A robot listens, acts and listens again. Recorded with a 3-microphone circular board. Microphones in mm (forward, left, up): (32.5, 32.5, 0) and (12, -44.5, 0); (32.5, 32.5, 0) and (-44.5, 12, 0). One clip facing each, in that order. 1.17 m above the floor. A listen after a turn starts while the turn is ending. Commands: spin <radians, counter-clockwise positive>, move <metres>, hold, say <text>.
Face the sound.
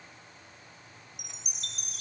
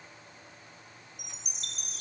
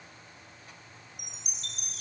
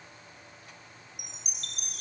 spin -2.71
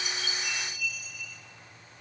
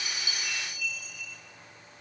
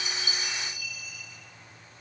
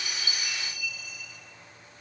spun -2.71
spin -0.17
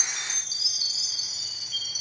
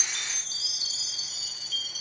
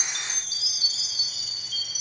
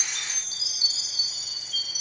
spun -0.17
say Found it: a chime, straight ahead.